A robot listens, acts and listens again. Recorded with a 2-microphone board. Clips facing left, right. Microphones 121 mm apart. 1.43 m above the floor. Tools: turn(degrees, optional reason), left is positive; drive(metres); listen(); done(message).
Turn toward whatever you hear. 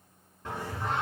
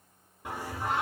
turn(degrees=-30)
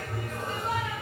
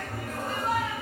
turn(degrees=-135, reason="So it is at 135° right.")
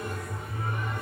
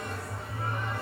turn(degrees=-30, reason="The singing is now 30° right.")
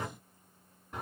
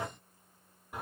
done("Found it: singing, straight ahead, over 4 m away.")